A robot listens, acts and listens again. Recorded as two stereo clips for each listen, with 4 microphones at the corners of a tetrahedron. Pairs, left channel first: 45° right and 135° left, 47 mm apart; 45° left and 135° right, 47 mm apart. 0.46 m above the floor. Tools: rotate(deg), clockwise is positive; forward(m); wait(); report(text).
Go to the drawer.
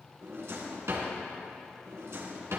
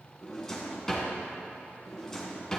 rotate(-120)
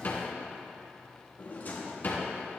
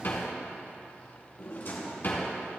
forward(1.0)
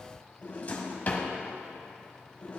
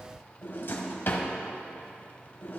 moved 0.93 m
rotate(-10)
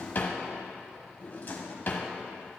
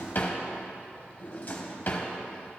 forward(1.0)
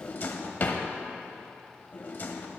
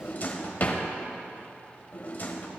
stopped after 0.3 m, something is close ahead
report("I am next to the drawer.")